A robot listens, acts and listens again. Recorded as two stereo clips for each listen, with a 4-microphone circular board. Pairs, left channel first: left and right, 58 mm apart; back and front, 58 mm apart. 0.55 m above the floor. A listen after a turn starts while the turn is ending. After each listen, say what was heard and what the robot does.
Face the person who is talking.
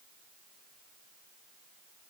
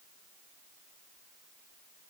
Keep listening.
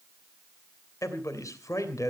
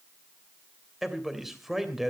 The man speaking: 85° left. Turn 85° left.
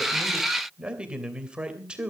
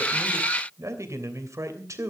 The man speaking is now 20° right. Turn 20° right.
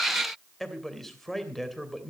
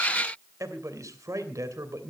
Facing the man speaking.